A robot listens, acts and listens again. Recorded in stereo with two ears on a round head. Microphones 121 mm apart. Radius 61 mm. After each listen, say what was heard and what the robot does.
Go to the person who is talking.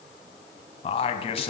The man speaking: about 45° left or 135° left. Turn 45° left.
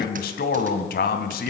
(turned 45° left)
So it is at 90° left. Turn 90° left.
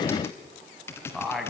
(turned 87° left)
Drive 1.0 m forward.
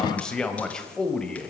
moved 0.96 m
Drive 1.0 m forward.
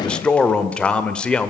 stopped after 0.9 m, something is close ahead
The man speaking is now 10° left. Turn 10° left.
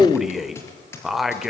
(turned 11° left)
Arrived at the man speaking, straight ahead.